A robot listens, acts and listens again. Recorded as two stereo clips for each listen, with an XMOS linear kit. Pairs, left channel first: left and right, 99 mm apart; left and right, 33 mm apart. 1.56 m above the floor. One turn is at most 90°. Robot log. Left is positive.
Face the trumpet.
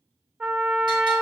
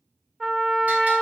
note: The trumpet: about 20° right or 160° right.
cmd yaw -20
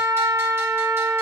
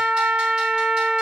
note: So it is at 140° right.
cmd yaw -90
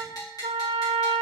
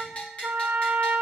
note: The trumpet is now 75° right.
cmd yaw -75
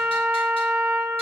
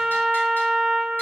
end: Found it: a trumpet, straight ahead.